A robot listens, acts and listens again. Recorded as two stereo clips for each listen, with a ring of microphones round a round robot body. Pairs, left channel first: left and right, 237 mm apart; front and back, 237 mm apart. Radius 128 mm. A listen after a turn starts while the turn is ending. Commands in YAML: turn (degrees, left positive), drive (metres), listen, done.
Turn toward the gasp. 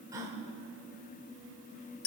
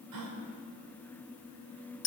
turn: -165
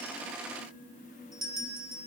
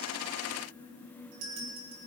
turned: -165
done: "I heard a gasp from this way, but can't make it out now."